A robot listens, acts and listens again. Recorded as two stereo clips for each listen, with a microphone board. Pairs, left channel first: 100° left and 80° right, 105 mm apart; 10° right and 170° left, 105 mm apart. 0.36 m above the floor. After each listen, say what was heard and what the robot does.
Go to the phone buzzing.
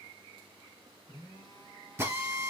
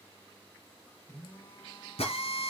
The phone buzzing: 50° left. Turn 50° left.
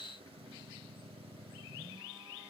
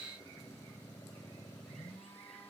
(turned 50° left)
Keep listening.
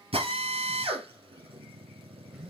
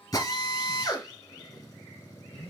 Keep listening.
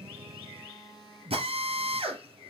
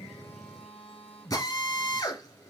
Drive 1.0 m forward.
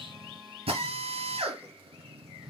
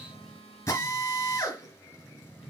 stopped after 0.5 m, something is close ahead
Blocked. The phone buzzing is further on, straight ahead.